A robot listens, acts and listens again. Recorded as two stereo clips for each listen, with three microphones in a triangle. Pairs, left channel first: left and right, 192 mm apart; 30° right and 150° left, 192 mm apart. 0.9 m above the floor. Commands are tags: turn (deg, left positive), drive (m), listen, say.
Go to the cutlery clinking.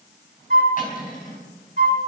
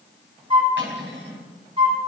<turn deg="135"/>
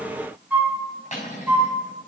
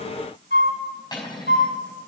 <turn deg="40"/>
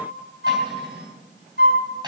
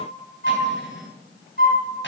<turn deg="-20"/>
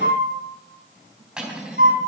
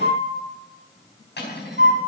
<drive m="1.0"/>
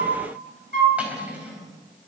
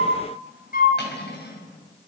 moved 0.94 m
<drive m="1.0"/>
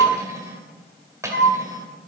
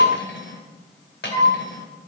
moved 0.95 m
<turn deg="-15"/>
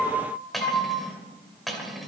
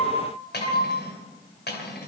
<drive m="1.0"/>
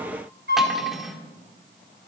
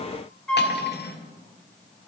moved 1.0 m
<drive m="1.0"/>
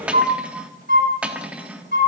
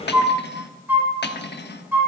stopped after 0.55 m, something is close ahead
<say>I am next to the cutlery clinking.</say>